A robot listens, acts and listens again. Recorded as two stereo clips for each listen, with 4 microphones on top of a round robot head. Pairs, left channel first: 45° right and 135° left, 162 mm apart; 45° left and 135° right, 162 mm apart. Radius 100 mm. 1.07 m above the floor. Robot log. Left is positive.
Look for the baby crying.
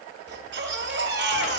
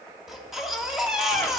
note: The baby crying: 135° left.
cmd yaw +135
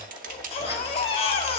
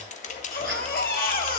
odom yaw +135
note: The baby crying is now 10° left.
cmd yaw +10
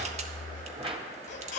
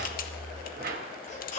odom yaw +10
end: Facing the baby crying.